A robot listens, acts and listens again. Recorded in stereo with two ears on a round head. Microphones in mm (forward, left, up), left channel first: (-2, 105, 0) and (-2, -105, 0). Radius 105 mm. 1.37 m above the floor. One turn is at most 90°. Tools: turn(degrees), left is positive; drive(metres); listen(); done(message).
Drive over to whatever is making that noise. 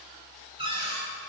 turn(degrees=-25)
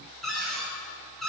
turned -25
drive(metres=1.0)
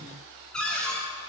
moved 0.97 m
drive(metres=1.0)
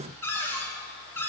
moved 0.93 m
turn(degrees=10)
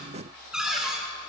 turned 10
drive(metres=1.0)
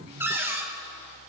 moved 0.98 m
turn(degrees=-10)
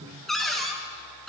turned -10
drive(metres=1.0)
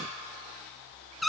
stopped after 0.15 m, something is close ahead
done("I am next to the cupboard door.")